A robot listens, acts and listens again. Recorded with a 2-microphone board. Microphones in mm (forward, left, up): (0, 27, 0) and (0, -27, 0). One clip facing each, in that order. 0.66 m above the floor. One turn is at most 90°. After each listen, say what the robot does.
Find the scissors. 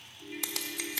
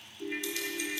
Turn 90° left.
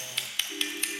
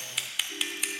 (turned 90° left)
Facing the scissors.